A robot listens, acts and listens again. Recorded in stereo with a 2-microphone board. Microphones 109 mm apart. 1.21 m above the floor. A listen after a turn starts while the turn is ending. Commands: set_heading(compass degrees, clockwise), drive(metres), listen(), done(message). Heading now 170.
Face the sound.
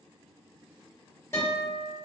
set_heading(140)
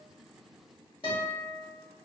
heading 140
set_heading(20)
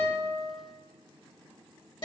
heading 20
set_heading(330)
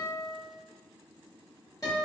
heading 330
set_heading(300)
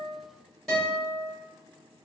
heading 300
done("Found it: a guitar, straight ahead.")